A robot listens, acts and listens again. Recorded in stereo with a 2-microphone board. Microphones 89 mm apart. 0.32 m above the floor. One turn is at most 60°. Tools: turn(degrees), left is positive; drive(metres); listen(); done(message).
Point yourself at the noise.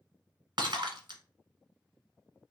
turn(degrees=-60)
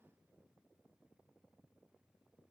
listen()
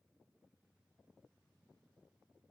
done("I heard breaking glass, but can't make it out now. It was about straight ahead or 60° right.")